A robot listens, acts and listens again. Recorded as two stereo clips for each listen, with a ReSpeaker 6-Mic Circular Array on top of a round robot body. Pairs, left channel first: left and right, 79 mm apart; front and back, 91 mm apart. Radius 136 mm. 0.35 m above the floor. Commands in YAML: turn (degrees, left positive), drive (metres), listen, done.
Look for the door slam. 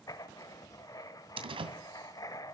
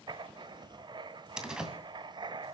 turn: -95
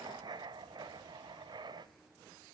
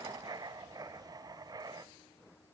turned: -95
done: "Facing where the door slam came from. I can't hear it now."